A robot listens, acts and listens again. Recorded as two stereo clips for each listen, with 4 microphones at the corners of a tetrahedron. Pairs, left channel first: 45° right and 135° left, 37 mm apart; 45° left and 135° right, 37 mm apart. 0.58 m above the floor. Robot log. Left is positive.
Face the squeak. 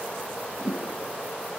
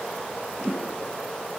cmd idle
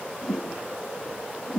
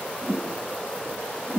cmd idle
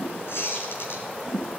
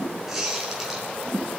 note: The squeak: 55° right.
cmd yaw -55
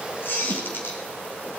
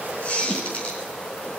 note: The squeak is now 15° right.
cmd yaw -15
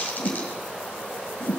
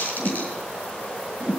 end: Facing the squeak, over 4 m away.